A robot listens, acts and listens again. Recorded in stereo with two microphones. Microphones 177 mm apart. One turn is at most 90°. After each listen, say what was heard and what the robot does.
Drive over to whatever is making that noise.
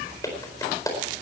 The clap: about 20° left or 160° left. Turn 20° left.
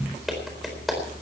Drive 1.0 m forward.
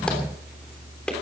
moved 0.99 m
Drive 1.0 m forward.
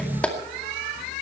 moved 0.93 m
Drive 1.0 m forward.
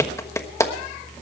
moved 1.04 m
The clap is now 15° left. Turn 15° left.
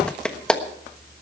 Drive 1.0 m forward.
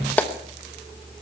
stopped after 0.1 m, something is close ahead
The clap is now 10° left. Turn 10° left.
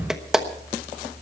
Arrived at the clap, straight ahead.